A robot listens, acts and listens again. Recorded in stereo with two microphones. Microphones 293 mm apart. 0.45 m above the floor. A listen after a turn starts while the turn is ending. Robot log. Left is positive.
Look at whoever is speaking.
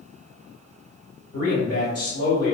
note: The man speaking: about 55° left or 125° left.
cmd yaw +55
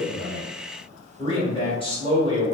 note: So it is at 20° left.
cmd yaw +20
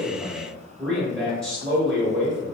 end: Found it: a man speaking, straight ahead.